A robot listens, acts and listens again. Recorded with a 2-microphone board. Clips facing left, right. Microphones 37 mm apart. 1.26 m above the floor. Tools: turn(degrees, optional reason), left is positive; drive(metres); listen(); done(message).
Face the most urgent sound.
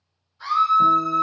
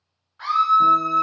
turn(degrees=-65, reason="The scream: about 65° right or 115° right.")
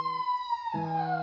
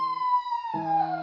done("Found it: a scream, straight ahead.")